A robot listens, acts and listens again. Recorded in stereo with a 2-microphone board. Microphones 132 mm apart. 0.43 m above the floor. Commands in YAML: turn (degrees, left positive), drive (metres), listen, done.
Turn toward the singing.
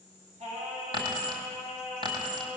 turn: -55
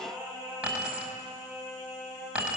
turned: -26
turn: -25
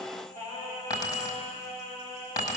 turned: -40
turn: 20
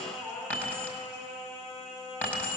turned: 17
done: "Found it: singing, straight ahead, over 4 m away."